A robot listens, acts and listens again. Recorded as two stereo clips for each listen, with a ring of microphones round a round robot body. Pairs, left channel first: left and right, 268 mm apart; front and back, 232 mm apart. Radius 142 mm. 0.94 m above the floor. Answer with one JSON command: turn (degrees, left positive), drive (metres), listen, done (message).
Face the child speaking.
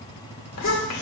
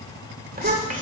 {"turn": 125}
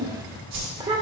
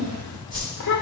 {"turn": -20}
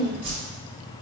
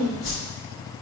{"done": "Found it: a child speaking, straight ahead, 1 to 2 m away."}